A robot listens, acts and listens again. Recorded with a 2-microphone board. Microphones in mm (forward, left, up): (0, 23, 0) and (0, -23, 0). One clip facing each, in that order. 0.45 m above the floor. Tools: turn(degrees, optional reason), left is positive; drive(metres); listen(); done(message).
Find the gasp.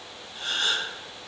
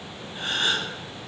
turn(degrees=-35, reason="The gasp: about 35° right or 145° right.")
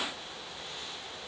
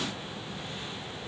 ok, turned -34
listen()
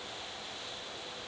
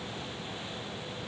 done("I heard a gasp, but can't make it out now. It was about straight ahead or 115° right.")